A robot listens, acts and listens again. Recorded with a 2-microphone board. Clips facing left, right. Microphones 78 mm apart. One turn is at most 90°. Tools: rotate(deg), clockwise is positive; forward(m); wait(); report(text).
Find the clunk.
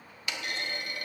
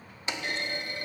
rotate(30)
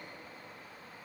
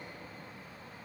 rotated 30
wait()
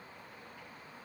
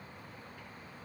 report("I heard a clunk, but can't make it out now. It was about straight ahead or 120° right.")